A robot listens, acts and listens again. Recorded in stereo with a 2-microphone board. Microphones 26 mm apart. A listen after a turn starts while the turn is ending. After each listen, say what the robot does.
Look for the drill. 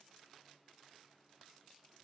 Keep listening.
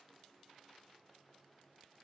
Keep listening.
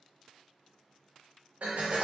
Turn 70° right.
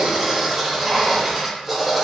Turn 10° right.
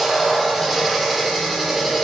Facing the drill, under 1 m away.